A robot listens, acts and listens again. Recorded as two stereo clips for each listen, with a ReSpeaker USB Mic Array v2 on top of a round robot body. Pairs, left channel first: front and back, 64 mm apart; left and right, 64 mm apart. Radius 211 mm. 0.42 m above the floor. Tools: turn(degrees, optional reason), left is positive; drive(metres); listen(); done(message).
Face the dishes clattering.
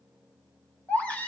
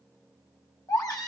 listen()
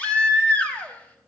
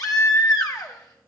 listen()
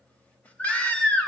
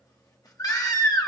done("I can't make out dishes clattering to turn to.")